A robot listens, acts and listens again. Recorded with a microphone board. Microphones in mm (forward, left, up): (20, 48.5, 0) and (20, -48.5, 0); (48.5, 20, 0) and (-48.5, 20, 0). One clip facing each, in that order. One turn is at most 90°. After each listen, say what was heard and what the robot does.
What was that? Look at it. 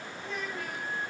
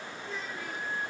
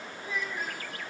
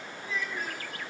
The child speaking: 70° left. Turn 70° left.
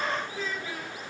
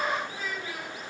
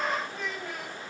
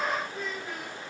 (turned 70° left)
The child speaking is now 15° right. Turn 15° right.
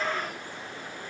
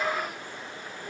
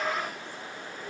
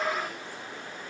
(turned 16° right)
Keep listening.
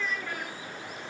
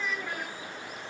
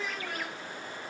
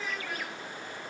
The child speaking is now 20° right. Turn 20° right.
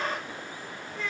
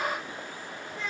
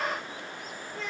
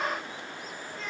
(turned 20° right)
The child speaking is now 20° right. Turn 20° right.
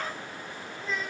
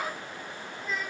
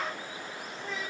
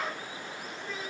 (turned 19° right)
Found it: a child speaking, straight ahead, 2 to 4 m away.